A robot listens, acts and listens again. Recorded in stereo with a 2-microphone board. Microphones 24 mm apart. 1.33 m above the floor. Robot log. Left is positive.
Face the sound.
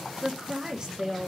note: The woman speaking: about 40° right or 140° right.
cmd yaw -40
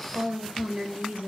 note: So it is at 100° right.
cmd yaw -100
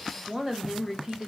note: The woman speaking is now 10° right.
cmd yaw -10
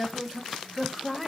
end: Facing the woman speaking, 1 to 2 m away.